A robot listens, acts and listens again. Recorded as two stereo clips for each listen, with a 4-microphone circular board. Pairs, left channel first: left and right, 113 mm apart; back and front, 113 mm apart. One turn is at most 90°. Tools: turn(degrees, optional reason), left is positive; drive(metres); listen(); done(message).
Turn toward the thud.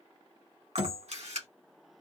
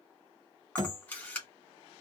turn(degrees=-50, reason="The thud: 50° right.")
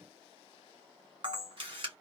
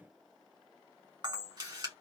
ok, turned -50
done("Facing where the thud came from. I can't hear it now.")